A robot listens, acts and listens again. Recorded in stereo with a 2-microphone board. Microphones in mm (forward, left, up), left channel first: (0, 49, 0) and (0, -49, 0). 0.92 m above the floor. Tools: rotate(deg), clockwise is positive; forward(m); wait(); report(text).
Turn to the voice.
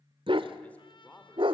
rotate(-30)
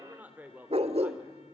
rotate(15)
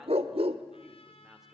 wait()
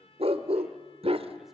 wait()
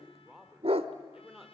report("Facing the man speaking, 2 to 4 m away.")